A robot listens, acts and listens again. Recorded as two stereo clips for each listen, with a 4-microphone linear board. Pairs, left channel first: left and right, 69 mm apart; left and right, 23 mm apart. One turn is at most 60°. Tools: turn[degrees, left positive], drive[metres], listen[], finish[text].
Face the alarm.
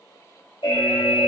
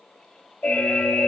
Action: turn[60]
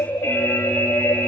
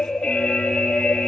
Thought: So it is at 25° left.
Action: turn[25]
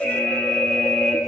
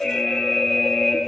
Action: finish[Facing the alarm, 2 to 4 m away.]